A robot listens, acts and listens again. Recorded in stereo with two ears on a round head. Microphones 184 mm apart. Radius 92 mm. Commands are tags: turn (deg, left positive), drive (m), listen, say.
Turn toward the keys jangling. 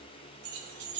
<turn deg="-35"/>
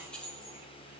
<say>Found it: keys jangling, straight ahead.</say>